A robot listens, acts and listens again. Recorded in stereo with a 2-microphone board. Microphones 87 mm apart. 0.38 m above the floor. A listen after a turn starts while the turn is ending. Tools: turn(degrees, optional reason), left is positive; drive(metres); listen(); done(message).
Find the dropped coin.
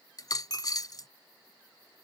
turn(degrees=45, reason="The dropped coin: about 45° left or 135° left.")
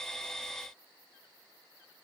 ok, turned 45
listen()
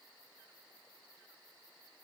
done("I heard a dropped coin, but can't make it out now. It was about straight ahead or 90° left.")